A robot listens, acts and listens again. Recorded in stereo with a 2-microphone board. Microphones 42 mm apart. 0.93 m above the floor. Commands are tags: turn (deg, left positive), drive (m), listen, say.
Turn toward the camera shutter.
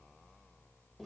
<listen/>
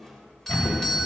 <turn deg="30"/>
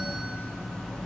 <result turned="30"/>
<listen/>
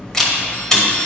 <turn deg="10"/>
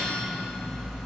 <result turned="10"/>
<listen/>
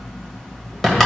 <say>Facing the camera shutter.</say>